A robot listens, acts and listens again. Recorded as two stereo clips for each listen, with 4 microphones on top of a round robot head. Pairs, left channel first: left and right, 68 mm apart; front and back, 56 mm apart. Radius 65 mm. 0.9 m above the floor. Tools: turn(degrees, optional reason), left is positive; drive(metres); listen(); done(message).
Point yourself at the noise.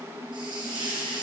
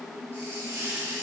turn(degrees=-115, reason="The hiss: 115° right.")
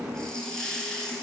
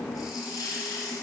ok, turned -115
turn(degrees=10, reason="The hiss is now 10° left.")
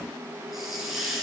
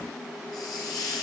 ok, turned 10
done("Found it: a hiss, straight ahead.")